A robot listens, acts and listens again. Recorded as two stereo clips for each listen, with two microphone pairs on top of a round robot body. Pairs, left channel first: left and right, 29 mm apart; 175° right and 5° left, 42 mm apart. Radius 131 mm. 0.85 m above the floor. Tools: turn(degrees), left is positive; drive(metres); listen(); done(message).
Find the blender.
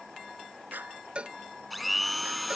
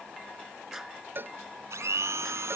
done("Facing the blender.")